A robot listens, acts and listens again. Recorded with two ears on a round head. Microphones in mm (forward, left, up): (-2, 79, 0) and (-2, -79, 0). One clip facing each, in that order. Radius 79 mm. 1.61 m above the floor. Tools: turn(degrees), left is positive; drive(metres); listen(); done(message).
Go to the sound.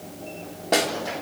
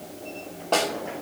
turn(degrees=15)
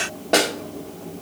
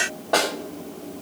turn(degrees=150)
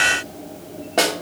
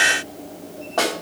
turn(degrees=30)
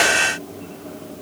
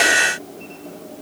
listen()
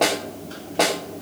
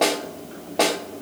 drive(metres=1.0)
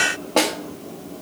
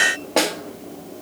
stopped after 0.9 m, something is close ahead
done("I am next to the snare drum.")